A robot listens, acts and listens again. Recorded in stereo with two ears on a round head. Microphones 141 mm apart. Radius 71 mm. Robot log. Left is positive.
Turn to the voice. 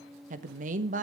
note: The woman speaking: about 50° right or 130° right.
cmd yaw -50
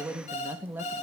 note: So it is at 15° right.
cmd yaw -15
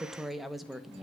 end: Found it: a woman speaking, straight ahead, 1 to 2 m away.